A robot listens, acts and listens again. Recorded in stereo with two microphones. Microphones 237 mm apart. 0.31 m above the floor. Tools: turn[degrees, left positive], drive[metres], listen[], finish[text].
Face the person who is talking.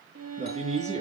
Thought: The man speaking: about 30° right or 150° right.
Action: turn[-30]
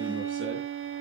Action: listen[]
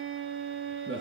Thought: So it is at 120° right.
Action: turn[-120]
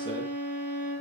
Action: listen[]
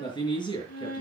Thought: The man speaking is now 20° left.
Action: turn[20]
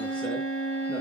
Action: listen[]
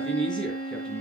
Action: finish[Found it: a man speaking, straight ahead.]